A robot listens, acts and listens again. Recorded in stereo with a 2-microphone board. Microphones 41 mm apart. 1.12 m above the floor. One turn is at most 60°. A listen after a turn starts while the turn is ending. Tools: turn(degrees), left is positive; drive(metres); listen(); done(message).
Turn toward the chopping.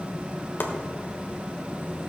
turn(degrees=55)
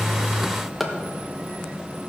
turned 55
done("Found it: chopping, straight ahead.")